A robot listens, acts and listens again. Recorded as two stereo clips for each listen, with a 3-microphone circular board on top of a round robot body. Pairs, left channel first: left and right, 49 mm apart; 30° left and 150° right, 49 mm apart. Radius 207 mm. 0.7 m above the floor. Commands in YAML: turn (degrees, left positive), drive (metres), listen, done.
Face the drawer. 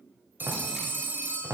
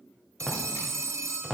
turn: -55
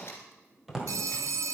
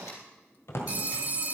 done: "Found it: a drawer, straight ahead."